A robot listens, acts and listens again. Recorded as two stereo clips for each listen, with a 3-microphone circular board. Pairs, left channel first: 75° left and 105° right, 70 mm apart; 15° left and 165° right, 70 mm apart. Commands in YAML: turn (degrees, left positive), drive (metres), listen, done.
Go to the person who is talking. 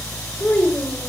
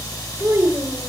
turn: 140
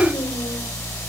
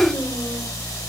listen: true
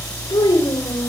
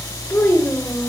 turn: 70
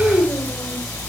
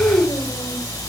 turn: 15
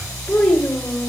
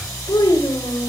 drive: 1.0
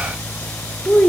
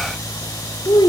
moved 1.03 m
turn: -10
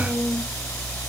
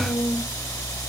listen: true
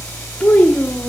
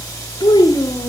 drive: 1.0
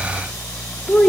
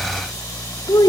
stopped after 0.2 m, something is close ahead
done: "Arrived at the child speaking, straight ahead."